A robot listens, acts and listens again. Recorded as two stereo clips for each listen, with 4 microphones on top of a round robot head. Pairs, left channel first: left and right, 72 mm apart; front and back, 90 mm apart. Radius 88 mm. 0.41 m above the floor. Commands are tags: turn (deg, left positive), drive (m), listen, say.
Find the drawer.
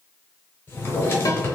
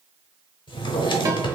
<turn deg="30"/>
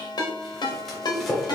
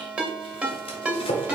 <say>Facing the drawer, under 1 m away.</say>